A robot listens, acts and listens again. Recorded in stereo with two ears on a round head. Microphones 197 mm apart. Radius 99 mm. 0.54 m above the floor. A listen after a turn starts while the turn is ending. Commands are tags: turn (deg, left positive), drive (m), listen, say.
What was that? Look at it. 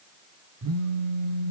<turn deg="-90"/>
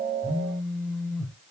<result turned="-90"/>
<say>Facing the phone buzzing.</say>